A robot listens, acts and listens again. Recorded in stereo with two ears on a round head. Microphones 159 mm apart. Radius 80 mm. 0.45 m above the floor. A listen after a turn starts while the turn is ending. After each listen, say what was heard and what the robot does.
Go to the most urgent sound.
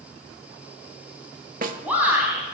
Turn 30° right.
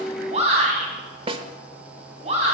So it is at 140° right. Turn 140° right.
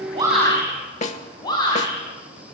The shout is now 25° left. Turn 25° left.
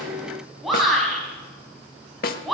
Drive 1.0 m forward.
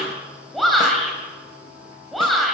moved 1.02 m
Drive 1.0 m forward.
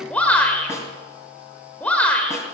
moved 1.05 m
The shout is now 10° left. Turn 10° left.
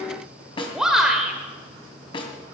Drive 1.0 m forward.
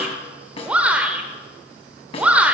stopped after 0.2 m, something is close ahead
The shout is now 10° right. Turn 10° right.
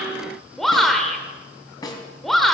Arrived at the shout, straight ahead.